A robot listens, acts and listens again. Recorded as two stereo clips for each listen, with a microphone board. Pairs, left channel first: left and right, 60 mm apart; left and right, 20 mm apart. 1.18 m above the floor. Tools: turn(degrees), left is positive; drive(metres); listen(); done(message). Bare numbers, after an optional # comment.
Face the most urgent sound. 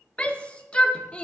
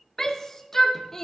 # The shout: about 20° left or 160° left.
turn(20)
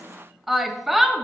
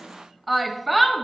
done("Facing the shout.")